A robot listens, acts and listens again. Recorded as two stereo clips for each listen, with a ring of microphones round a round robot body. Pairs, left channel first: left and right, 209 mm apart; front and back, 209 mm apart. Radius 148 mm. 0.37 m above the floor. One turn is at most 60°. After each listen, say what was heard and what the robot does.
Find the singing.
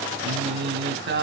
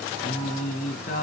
The singing: 60° right. Turn 60° right.
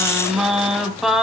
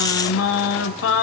Found it: singing, straight ahead.